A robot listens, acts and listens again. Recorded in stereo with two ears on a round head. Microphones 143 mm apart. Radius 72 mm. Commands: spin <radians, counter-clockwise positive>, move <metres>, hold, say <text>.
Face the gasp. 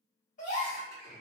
spin 0.87
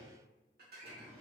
hold
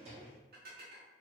say I heard a gasp, but can't make it out now. It was about straight ahead or 80° left.